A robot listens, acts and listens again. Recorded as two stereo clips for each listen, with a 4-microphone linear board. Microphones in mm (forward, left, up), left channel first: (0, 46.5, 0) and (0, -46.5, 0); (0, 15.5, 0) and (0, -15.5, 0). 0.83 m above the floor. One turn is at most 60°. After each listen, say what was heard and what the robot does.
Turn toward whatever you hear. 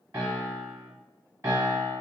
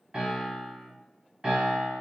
The piano: about 35° right or 145° right. Turn 35° right.
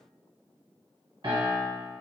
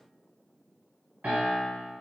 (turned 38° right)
So it is at 105° right. Turn 60° right.
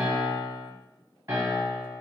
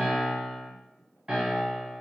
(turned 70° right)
The piano is now 35° right. Turn 35° right.
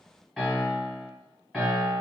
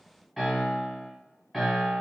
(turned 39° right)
Facing the piano.